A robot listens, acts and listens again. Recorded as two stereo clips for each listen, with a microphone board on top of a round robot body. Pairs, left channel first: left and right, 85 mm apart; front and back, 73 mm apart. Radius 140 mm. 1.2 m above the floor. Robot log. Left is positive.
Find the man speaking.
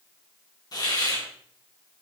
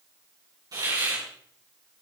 cmd idle
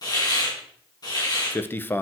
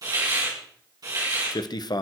note: The man speaking: 25° left.
cmd yaw +25
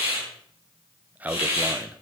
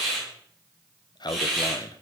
note: The man speaking is now 20° right.
cmd yaw -20
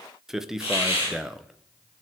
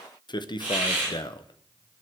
end: Facing the man speaking.